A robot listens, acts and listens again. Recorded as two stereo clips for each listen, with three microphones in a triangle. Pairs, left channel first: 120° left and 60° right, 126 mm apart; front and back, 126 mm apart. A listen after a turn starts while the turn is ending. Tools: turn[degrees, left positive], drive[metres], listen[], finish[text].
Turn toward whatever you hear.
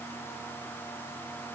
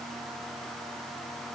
Action: listen[]
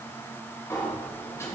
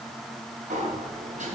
Thought: The sliding door: 175° right.
Action: turn[-175]
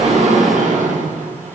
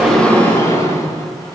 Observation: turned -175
Thought: The sliding door is now 70° right.
Action: turn[-70]
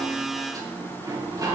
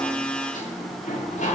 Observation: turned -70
Action: finish[Facing the sliding door, 1 to 2 m away.]